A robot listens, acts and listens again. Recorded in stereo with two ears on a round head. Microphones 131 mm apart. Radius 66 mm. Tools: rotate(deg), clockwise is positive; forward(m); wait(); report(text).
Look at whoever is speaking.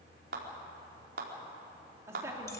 rotate(20)
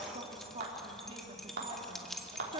rotate(140)
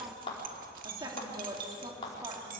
rotate(25)
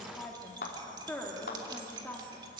rotate(-10)
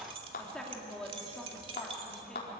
report("Found it: a woman speaking, straight ahead, 2 to 4 m away.")